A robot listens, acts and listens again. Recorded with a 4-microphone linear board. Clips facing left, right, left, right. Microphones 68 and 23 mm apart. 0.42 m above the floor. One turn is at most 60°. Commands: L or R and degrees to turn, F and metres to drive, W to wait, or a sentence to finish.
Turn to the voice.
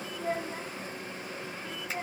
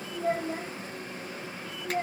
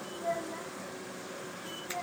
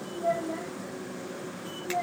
R50
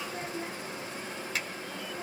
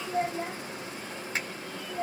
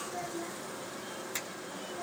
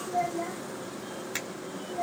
R60
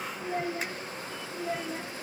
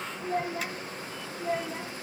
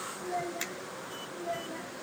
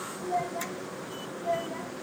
Facing the child speaking, 1 to 2 m away.